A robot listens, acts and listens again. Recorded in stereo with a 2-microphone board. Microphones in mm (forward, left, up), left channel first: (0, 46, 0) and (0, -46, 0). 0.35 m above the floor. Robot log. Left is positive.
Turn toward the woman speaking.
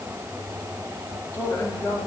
note: The woman speaking: about 25° left or 155° left.
cmd yaw +25
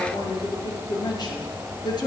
note: So it is at 130° left.
cmd yaw +130
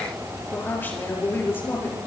note: The woman speaking is now 25° left.
cmd yaw +25
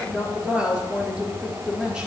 note: The woman speaking is now 10° right.
cmd yaw -10
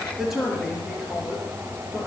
end: Facing the woman speaking, over 4 m away.